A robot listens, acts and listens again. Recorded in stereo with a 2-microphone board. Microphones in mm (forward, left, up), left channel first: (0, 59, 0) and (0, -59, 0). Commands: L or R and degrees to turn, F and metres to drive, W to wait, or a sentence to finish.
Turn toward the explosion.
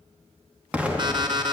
R30
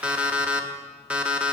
W
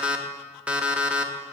I heard an explosion, but can't make it out now. It was about 20° left or 140° right.